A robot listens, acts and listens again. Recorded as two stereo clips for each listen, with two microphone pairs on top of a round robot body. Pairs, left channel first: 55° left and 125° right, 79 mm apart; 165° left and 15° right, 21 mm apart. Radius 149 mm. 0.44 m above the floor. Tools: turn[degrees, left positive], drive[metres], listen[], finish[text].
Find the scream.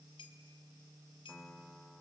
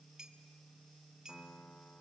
Action: listen[]
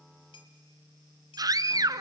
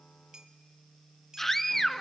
Thought: The scream: 120° right.
Action: turn[-120]
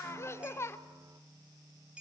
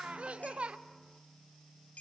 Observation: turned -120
Action: finish[Facing the scream, 1 to 2 m away.]